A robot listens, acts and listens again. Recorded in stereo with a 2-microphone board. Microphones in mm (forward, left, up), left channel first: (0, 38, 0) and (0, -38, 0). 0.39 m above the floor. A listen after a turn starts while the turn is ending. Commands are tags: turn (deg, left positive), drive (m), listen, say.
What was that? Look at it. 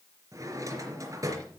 <turn deg="-45"/>
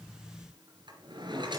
<turn deg="-90"/>
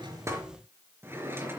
<turn deg="-30"/>
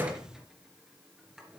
<turn deg="-10"/>
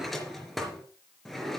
<say>Facing the drawer.</say>